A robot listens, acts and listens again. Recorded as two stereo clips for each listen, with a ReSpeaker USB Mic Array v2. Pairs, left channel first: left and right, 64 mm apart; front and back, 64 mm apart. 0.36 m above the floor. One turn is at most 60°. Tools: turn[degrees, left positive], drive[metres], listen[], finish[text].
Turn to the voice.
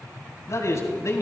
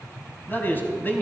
Thought: The man speaking: 55° left.
Action: turn[55]
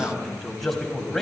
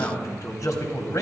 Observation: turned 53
Action: finish[Facing the man speaking, 2 to 4 m away.]